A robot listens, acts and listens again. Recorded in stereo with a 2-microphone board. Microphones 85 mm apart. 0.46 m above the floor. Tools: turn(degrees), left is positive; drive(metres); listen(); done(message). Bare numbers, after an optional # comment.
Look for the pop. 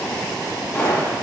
# The pop: about 25° left or 155° left.
turn(25)
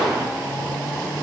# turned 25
done("Facing the pop.")